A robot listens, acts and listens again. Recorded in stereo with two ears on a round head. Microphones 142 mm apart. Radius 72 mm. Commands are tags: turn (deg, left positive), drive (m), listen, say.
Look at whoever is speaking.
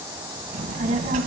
<turn deg="-45"/>
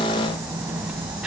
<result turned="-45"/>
<say>Facing the child speaking, 1 to 2 m away.</say>